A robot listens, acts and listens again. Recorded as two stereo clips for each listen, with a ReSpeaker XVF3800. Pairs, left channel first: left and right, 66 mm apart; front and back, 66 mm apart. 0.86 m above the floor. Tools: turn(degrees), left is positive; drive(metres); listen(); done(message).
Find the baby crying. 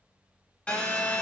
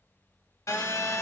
listen()
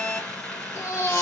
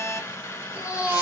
turn(degrees=120)
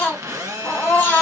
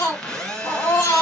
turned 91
turn(degrees=25)
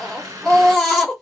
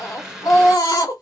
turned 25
done("Found it: a baby crying, straight ahead, 1 to 2 m away.")